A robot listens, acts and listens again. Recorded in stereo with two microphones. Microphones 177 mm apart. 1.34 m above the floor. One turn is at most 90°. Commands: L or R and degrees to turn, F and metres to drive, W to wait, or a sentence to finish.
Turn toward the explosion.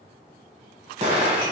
R35
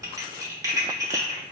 W
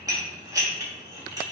I heard an explosion, but can't make it out now. It was about straight ahead or 110° right.